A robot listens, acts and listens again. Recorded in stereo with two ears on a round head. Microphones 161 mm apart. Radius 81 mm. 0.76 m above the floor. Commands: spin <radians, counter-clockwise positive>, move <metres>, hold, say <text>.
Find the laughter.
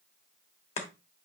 hold
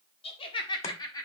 spin 0.35
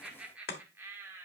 spin -0.26
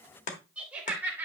spin -0.17
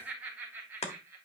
spin -0.26
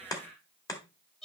say Found it: laughter, straight ahead.